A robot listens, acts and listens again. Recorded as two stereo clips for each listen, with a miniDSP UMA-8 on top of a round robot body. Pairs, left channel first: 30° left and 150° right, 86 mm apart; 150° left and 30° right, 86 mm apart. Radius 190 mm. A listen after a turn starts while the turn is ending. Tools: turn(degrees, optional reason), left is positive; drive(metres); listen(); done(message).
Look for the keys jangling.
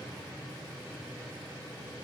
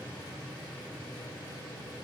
listen()
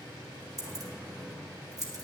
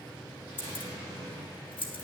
turn(degrees=165, reason="The keys jangling: 165° left.")
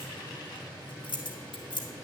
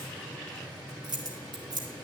done("Found it: keys jangling, straight ahead.")